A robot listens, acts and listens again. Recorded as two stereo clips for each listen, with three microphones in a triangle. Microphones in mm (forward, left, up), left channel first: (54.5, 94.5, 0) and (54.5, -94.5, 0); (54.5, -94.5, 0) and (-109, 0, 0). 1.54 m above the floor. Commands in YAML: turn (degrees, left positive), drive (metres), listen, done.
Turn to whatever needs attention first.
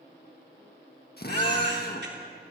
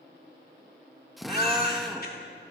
turn: -65
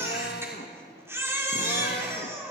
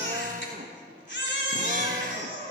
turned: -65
turn: -15
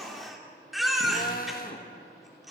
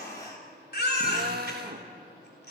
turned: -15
done: "Facing the baby crying."